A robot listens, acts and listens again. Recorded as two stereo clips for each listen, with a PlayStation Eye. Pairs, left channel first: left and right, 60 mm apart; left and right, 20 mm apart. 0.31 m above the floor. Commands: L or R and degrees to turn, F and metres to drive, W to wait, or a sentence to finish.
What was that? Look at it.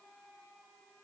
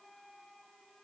W
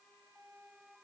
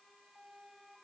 W
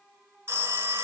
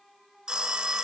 R40
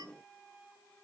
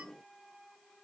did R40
W
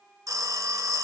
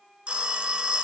R95
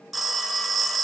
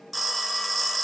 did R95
Found it: a phone ringing, straight ahead.